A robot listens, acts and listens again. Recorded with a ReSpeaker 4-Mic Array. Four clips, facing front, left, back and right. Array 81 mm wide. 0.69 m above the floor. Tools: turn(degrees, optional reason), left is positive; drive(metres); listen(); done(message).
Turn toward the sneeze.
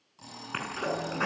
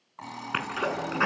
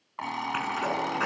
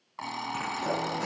turn(degrees=90, reason="The sneeze: 90° left.")
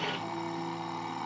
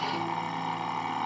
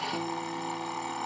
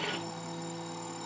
done("I heard a sneeze from this way, but can't make it out now.")